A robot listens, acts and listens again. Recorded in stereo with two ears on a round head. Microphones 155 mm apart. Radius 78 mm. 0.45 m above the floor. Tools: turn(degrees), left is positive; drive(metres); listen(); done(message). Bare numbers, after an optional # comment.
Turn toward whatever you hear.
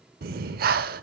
# The breathing: about 55° right or 125° right.
turn(-55)
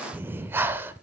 # So it is at 15° right.
turn(-15)
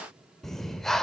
done("Found it: breathing, straight ahead.")